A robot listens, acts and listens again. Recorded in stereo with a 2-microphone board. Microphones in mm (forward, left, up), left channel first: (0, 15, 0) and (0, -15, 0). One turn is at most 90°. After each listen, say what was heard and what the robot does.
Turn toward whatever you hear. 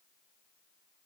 Keep listening.
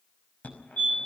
The fire alarm: about 60° left or 120° left. Turn 60° left.
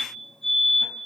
So it is at 10° left. Turn 10° left.
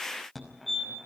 Facing the fire alarm.